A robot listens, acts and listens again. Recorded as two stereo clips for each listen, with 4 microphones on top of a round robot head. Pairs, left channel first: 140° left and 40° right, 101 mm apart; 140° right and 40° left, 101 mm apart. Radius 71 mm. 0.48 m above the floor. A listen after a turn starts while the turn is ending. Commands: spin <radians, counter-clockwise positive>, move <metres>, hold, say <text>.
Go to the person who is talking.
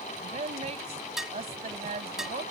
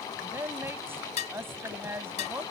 spin -0.44
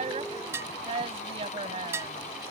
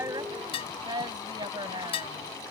spin -0.17
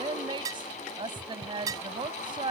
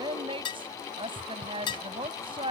move 1.0
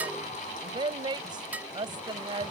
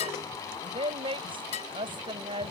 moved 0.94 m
move 1.0
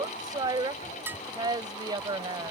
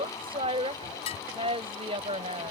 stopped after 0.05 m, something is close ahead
spin 0.17
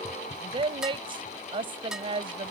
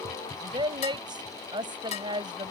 say Something is in my way. I am facing the woman speaking but have not reached it.